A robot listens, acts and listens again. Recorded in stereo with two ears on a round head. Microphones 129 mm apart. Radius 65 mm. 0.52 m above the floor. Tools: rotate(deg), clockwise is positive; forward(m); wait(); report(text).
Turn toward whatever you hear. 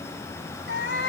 rotate(-90)
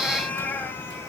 rotate(-15)
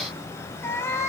rotate(-20)
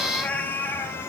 rotate(-15)
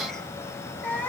rotate(-10)
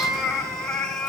report("Facing the cat meowing, 2 to 4 m away.")